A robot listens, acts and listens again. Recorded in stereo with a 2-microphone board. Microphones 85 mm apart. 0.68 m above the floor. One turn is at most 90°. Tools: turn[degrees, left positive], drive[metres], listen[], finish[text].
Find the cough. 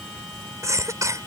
Thought: The cough: about 40° right or 140° right.
Action: turn[-40]
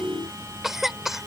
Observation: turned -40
Action: finish[Found it: a cough, straight ahead.]